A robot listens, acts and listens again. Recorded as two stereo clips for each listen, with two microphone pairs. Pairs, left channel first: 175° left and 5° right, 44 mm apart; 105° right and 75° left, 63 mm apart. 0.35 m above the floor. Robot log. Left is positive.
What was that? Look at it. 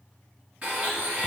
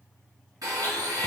note: The blender: 60° left.
cmd yaw +60
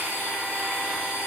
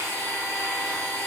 note: The blender is now 30° left.
cmd yaw +30
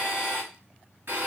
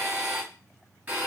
note: The blender is now 15° left.
cmd yaw +15
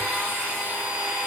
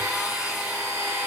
end: Facing the blender, 1 to 2 m away.